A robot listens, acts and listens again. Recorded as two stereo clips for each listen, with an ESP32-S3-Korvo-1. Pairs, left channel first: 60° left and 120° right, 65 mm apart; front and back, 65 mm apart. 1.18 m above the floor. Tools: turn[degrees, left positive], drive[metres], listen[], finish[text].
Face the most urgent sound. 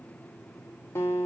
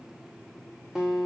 Action: listen[]
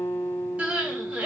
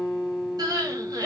Thought: The crying: 170° left.
Action: turn[170]
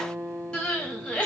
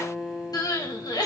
Thought: The crying is now 20° right.
Action: turn[-20]
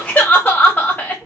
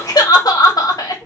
Action: finish[Found it: crying, straight ahead.]